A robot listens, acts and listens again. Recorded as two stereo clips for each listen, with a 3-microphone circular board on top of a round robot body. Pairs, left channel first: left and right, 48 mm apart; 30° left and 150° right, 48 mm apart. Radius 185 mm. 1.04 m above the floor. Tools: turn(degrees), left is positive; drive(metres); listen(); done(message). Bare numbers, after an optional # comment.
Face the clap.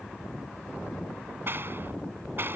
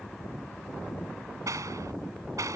# The clap: 135° right.
turn(-135)
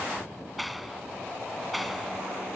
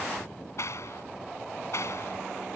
done("Facing the clap.")